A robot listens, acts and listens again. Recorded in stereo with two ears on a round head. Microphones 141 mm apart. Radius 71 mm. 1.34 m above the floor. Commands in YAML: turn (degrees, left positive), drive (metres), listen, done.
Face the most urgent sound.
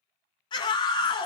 turn: 30
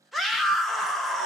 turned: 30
done: "Facing the scream, under 1 m away."